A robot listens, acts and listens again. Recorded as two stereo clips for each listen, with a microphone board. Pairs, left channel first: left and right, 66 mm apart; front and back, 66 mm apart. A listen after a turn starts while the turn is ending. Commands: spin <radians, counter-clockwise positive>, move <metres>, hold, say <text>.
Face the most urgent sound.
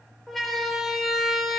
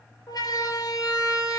say Found it: a siren, straight ahead, over 4 m away.